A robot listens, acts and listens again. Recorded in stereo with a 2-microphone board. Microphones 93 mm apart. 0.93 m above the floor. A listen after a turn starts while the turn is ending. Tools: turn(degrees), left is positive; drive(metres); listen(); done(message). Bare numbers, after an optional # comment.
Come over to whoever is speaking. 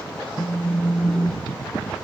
listen()
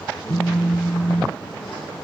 listen()
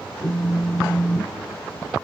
done("I can't make out anyone speaking to turn to.")